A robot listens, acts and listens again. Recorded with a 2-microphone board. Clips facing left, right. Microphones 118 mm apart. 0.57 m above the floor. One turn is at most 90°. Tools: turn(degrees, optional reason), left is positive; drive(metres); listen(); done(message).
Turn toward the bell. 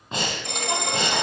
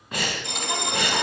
turn(degrees=45, reason="The bell: about 45° left or 135° left.")
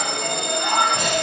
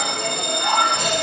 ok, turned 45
done("Facing the bell, 1 to 2 m away.")